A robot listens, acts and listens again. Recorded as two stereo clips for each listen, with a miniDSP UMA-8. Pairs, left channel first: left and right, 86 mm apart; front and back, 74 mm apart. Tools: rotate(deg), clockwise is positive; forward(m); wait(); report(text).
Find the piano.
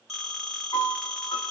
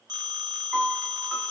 rotate(-100)
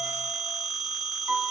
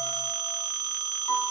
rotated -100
rotate(10)
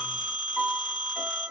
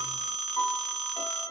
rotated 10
report("Facing the piano, 1 to 2 m away.")